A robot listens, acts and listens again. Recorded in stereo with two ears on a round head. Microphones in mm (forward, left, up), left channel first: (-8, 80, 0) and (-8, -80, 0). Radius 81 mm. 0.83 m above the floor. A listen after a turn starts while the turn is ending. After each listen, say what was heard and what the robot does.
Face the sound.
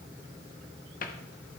Keep listening.
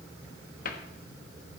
The cupboard door: about 50° left or 130° left. Turn 50° left.
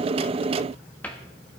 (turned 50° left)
So it is at 10° left. Turn 10° left.
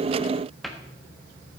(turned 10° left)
Facing the cupboard door.